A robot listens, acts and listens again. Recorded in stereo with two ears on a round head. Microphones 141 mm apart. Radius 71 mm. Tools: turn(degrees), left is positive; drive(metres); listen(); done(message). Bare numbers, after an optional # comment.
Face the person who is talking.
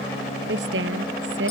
turn(-90)
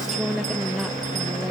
done("Facing the woman speaking.")